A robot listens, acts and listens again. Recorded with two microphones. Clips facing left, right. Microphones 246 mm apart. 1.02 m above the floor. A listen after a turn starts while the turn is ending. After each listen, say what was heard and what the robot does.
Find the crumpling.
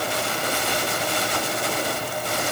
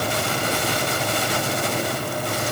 Keep listening.
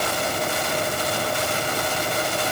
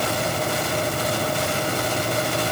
Keep listening.
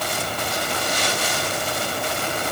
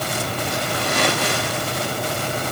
The crumpling: about 65° right or 115° right. Turn 65° right.
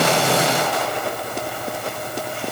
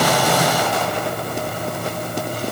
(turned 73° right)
Keep listening.
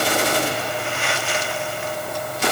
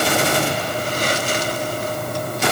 So it is at 40° right. Turn 40° right.
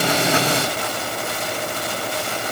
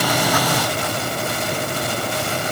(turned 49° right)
Keep listening.
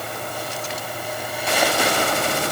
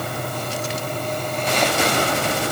Keep listening.
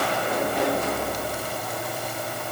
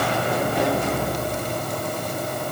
I heard crumpling from this way, but can't make it out now.